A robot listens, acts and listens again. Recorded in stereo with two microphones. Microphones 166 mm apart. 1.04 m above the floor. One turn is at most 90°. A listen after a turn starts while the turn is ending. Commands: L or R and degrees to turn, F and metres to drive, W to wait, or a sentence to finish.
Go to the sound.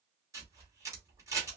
R20
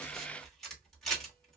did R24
F1.0
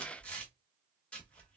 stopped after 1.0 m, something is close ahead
L10
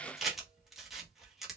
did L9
I am next to the camera shutter.